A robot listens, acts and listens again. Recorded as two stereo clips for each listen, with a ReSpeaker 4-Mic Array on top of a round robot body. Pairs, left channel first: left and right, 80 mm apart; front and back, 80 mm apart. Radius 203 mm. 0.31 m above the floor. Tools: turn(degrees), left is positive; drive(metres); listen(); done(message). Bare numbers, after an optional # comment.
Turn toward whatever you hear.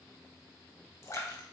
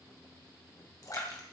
# The splash: 40° left.
turn(40)
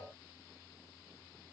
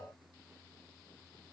done("I heard a splash from this way, but can't make it out now.")